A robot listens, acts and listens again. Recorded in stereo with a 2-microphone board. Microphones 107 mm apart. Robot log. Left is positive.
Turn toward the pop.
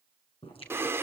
note: The pop: about 60° left or 120° left.
cmd yaw +60
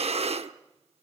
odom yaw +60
cmd idle
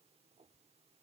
end: I heard a pop, but can't make it out now. It was about straight ahead or 60° left.